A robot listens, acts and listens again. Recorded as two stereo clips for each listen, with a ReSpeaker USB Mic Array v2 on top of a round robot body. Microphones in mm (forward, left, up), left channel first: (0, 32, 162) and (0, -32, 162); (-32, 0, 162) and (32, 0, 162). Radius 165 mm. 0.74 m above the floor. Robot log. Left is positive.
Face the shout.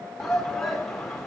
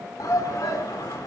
note: The shout: 175° left.
cmd yaw +175
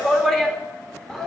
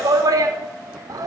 end: Found it: a shout, straight ahead.